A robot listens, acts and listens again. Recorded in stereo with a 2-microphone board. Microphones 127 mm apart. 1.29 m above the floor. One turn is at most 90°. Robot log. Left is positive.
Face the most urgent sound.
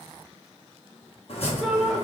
cmd yaw +30
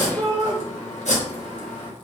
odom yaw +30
note: So it is at 35° right.
cmd yaw -35
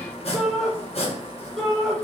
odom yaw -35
end: Found it: a shout, straight ahead, 1 to 2 m away.